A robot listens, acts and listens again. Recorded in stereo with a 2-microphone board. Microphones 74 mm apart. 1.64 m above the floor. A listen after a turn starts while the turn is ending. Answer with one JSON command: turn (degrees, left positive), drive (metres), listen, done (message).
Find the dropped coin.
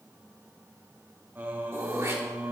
{"listen": true}
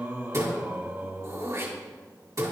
{"listen": true}
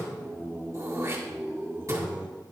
{"done": "I can't make out a dropped coin, only singing and throat clearing."}